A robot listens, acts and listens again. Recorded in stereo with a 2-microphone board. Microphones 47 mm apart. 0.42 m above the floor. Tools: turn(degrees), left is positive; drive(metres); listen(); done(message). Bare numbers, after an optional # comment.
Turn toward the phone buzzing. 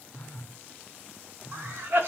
# The phone buzzing: about 50° left or 130° left.
turn(50)
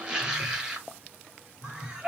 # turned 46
# So it is at 85° left.
turn(85)
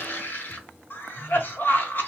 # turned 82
done("Facing the phone buzzing.")